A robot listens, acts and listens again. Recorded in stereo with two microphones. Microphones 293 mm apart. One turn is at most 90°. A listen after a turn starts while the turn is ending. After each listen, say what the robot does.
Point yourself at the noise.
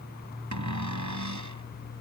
Turn 90° right.
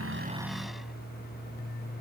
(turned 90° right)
Keep listening.
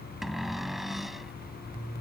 Found it: a cupboard door, straight ahead.